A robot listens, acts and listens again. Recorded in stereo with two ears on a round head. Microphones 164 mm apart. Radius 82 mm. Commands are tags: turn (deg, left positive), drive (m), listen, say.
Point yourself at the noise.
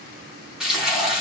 <turn deg="-30"/>
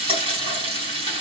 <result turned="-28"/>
<turn deg="-145"/>
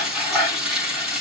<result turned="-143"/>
<say>Facing the frying, over 4 m away.</say>